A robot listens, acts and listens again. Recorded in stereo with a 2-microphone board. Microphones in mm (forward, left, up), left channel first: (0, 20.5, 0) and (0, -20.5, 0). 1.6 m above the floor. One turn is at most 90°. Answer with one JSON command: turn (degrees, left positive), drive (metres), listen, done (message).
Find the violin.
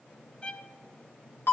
{"turn": 25}
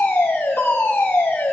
{"listen": true}
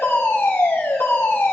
{"listen": true}
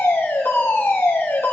{"done": "I heard a violin, but can't make it out now. It was about straight ahead or 130° left."}